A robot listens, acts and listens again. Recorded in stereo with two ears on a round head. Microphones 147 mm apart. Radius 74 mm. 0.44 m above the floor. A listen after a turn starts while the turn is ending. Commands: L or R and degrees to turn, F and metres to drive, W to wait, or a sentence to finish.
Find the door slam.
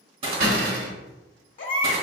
R60
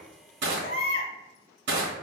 W
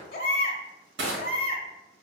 I heard a door slam, but can't make it out now. It was about straight ahead or 60° right.